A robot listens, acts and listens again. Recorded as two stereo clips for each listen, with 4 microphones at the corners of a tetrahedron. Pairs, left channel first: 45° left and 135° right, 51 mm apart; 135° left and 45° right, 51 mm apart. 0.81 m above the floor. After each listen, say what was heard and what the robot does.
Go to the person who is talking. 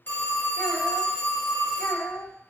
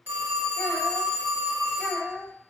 The child speaking: 50° left. Turn 50° left.
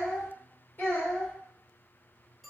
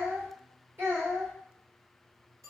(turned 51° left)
Drive 1.0 m forward.
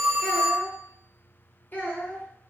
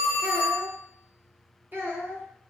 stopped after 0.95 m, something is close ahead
Arrived at the child speaking, straight ahead.